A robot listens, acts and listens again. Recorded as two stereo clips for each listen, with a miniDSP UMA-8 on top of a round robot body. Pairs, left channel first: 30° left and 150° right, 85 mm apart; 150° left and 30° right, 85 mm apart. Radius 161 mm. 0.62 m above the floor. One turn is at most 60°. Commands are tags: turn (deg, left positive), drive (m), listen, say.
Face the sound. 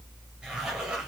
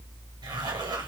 <turn deg="-60"/>
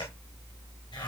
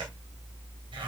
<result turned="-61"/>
<listen/>
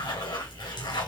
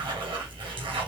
<say>Facing the zipper.</say>